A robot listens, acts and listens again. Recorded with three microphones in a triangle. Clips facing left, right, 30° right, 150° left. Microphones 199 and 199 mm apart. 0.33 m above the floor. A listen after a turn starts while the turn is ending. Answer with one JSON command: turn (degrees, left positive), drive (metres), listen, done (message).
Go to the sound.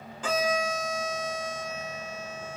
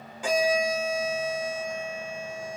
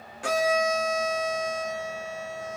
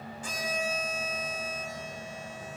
{"turn": -10}
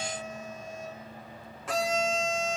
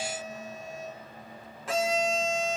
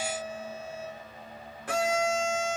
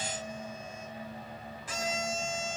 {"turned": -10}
{"drive": 1.0}
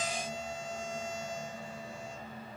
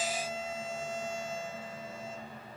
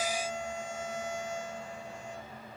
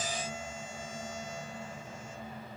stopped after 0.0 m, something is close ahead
{"done": "Something is in my way. I am facing the violin but have not reached it."}